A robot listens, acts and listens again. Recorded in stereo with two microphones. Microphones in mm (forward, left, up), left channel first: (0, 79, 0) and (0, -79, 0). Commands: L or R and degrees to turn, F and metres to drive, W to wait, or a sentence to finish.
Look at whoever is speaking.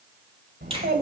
R75
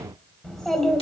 Facing the child speaking, 1 to 2 m away.